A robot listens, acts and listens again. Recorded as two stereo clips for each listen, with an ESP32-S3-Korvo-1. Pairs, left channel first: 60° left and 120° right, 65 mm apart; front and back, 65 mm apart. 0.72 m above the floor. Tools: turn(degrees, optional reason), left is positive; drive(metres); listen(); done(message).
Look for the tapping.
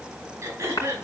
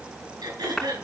turn(degrees=90, reason="The tapping: 90° left.")
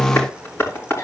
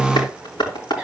done("Found it: tapping, straight ahead.")